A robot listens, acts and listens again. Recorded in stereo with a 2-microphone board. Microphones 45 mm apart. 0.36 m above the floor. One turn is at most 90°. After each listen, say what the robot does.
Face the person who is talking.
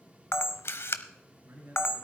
Turn 60° right.
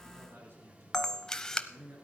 Turn 60° right.
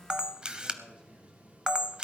Keep listening.
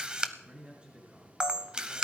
Turn 20° right.
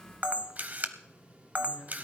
Keep listening.
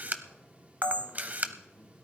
Keep listening.
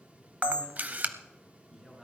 Facing the man speaking.